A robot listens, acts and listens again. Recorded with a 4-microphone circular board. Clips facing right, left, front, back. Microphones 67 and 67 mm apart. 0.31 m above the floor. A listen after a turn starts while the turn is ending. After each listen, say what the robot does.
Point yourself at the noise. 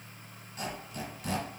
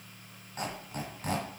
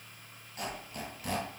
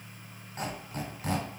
Turn 125° left.
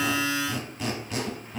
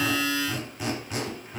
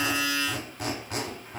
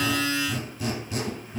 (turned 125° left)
Turn 10° left.
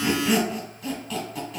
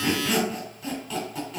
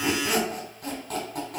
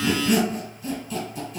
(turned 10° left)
Found it: a squeak, straight ahead, 1 to 2 m away.